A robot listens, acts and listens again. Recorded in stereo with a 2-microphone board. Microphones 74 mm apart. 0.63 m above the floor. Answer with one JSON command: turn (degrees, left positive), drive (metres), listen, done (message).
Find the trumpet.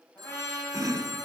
{"turn": 35}
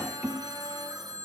{"listen": true}
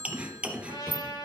{"turn": 110}
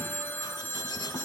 {"listen": true}
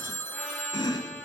{"listen": true}
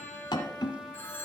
{"turn": 10}
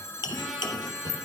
{"listen": true}
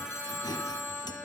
{"listen": true}
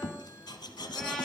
{"done": "I heard a trumpet from this way, but can't make it out now."}